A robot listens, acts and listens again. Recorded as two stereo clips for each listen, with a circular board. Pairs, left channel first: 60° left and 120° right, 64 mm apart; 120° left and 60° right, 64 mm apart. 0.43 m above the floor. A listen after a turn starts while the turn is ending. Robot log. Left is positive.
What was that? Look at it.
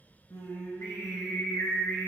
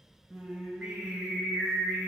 note: The singing: 30° left.
cmd yaw +30
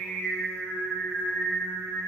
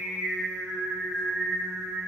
note: The singing is now 15° left.
cmd yaw +15
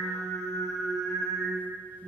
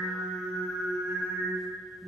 note: The singing is now 10° left.
cmd yaw +10
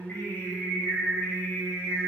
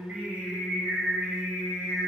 end: Facing the singing.